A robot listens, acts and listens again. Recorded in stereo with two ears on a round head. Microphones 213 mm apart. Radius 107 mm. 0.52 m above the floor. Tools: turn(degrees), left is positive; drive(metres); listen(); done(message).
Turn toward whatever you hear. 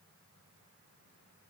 listen()
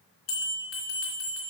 turn(degrees=65)
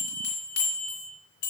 turn(degrees=50)
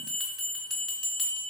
done("Found it: a bell, straight ahead, 2 to 4 m away.")